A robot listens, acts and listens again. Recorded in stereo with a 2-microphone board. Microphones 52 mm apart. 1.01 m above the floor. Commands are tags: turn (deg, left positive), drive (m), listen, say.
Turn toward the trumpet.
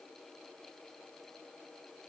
<listen/>
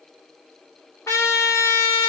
<turn deg="90"/>
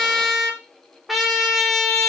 <say>Facing the trumpet.</say>